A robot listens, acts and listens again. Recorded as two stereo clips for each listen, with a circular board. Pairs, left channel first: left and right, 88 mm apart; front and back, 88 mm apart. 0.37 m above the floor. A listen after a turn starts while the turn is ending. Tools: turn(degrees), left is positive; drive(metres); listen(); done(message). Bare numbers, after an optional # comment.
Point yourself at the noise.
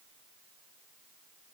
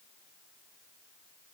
listen()
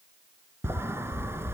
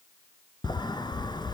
# The sliding door: 30° right.
turn(-30)
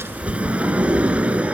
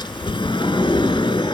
# The sliding door is now 15° right.
turn(-15)
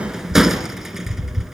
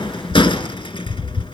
done("Facing the sliding door, 1 to 2 m away.")